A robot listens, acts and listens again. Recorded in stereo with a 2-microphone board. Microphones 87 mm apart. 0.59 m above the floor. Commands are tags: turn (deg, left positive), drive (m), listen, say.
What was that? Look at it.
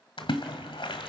<turn deg="90"/>
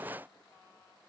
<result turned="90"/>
<say>I heard a splash from this way, but can't make it out now.</say>